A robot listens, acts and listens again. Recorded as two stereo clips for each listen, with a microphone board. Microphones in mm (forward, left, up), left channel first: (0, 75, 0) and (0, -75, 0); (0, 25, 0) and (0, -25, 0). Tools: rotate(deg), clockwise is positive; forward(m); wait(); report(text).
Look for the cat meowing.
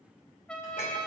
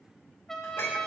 wait()
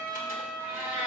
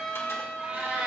rotate(35)
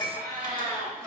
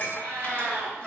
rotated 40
rotate(105)
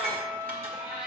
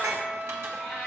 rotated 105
report("Found it: a cat meowing, straight ahead.")